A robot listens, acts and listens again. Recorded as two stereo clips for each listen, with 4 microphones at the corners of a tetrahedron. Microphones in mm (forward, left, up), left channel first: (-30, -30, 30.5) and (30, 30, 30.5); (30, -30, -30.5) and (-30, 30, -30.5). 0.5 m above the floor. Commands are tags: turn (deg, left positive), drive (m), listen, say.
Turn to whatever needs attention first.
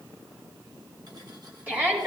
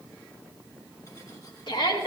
<turn deg="-25"/>
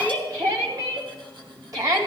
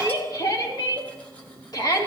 <say>Found it: a shout, straight ahead.</say>